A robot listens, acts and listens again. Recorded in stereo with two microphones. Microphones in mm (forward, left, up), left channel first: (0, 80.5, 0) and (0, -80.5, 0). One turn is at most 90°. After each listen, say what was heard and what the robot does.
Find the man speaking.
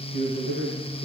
The man speaking: about 60° left or 120° left. Turn 60° left.
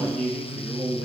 Facing the man speaking, over 4 m away.